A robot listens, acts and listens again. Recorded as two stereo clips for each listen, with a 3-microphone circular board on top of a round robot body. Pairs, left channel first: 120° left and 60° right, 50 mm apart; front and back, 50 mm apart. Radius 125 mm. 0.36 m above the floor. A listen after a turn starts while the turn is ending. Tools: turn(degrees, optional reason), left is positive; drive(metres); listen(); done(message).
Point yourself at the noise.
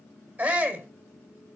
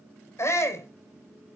turn(degrees=-15, reason="The shout: 15° right.")
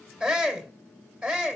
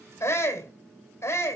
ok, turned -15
done("Found it: a shout, straight ahead, 2 to 4 m away.")